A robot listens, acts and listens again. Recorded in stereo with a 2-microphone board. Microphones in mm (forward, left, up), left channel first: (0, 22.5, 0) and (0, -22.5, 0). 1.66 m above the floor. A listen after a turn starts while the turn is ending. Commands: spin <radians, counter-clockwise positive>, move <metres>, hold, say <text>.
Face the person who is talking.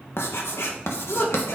spin 0.87
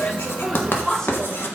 spin 0.17
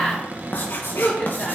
spin 0.17
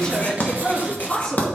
spin 0.17
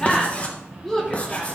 say Facing the woman speaking, 2 to 4 m away.